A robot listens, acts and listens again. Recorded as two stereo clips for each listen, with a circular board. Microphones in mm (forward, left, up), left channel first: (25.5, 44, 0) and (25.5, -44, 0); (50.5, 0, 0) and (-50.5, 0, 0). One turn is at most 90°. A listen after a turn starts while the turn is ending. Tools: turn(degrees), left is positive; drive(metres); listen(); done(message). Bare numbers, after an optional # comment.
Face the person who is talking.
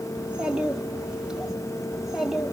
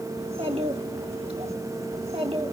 # The child speaking: 175° right.
turn(-90)
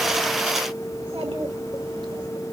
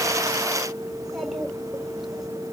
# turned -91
# Nothing new. It was at 85° right.
turn(-85)
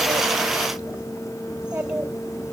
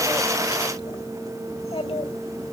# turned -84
# The child speaking is now 15° right.
turn(-15)
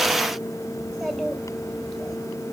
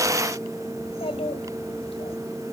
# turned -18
done("Found it: a child speaking, straight ahead, over 4 m away.")